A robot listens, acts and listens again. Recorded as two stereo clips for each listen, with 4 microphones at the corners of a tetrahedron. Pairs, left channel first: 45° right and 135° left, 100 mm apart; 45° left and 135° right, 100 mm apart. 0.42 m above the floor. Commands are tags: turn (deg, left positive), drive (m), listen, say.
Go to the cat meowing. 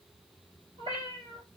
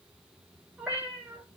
<turn deg="150"/>
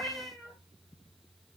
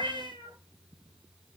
<turn deg="45"/>
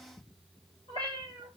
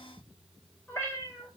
<turn deg="-25"/>
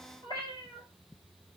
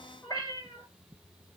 <drive m="1.0"/>
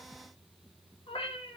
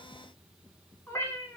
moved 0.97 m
<turn deg="-20"/>
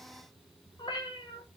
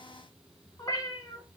<drive m="1.0"/>
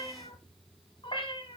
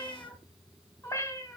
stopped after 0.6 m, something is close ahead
<turn deg="-15"/>
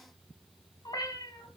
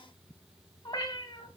<say>I am next to the cat meowing.</say>